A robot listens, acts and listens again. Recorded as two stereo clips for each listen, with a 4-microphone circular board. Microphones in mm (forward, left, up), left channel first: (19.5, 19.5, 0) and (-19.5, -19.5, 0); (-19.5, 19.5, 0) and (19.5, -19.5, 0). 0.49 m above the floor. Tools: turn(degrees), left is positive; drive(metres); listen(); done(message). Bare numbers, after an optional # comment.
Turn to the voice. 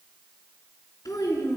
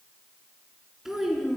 # The child speaking: 40° left.
turn(40)
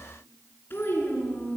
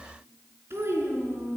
done("Found it: a child speaking, straight ahead, 2 to 4 m away.")